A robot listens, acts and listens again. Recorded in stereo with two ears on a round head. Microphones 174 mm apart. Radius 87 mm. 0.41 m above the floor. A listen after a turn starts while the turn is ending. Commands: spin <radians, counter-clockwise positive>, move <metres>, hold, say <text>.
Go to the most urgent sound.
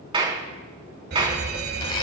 spin -1.05
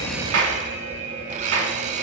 spin -0.79
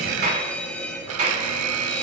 spin 0.17
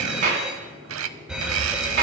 move 1.0
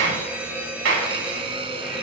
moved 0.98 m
spin -0.17
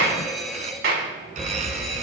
move 1.0
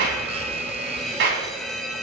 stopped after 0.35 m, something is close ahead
say Arrived at the alarm, straight ahead.